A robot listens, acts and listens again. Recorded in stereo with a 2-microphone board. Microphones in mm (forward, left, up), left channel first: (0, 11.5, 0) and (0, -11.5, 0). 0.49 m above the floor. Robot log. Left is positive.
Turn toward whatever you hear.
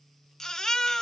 note: The baby crying: about 25° left or 155° left.
cmd yaw +25
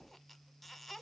cmd idle
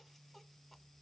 cmd idle
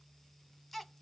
end: Facing the baby crying, under 1 m away.